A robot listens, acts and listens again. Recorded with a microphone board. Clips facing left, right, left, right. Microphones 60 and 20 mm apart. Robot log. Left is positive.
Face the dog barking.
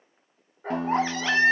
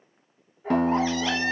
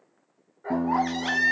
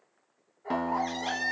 note: The dog barking: about 70° left or 110° left.
cmd yaw +70
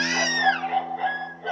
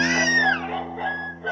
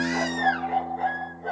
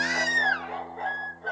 note: So it is at 15° right.
cmd yaw -15
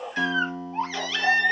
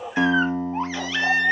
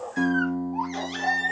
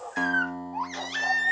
end: Found it: a dog barking, straight ahead.